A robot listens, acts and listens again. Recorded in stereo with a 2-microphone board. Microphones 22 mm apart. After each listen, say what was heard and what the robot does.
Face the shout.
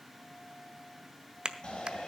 The shout: about 45° left or 135° left. Turn 45° left.
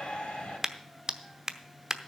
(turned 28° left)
So it is at 105° left. Turn 105° left.
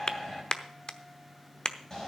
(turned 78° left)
The shout is now 25° left. Turn 25° left.
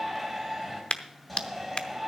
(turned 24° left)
Facing the shout, 2 to 4 m away.